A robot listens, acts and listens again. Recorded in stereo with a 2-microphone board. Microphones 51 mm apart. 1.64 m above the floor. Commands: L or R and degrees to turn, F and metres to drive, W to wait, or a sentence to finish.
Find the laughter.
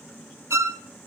W
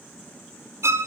W
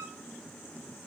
I can't make out laughter to turn to.